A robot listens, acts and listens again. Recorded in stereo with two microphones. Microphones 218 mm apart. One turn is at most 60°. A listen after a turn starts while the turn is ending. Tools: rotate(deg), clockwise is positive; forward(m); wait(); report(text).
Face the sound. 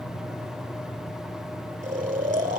rotate(35)
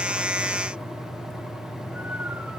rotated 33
wait()
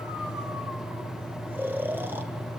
rotate(10)
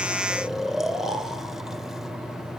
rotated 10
report("Facing the snoring.")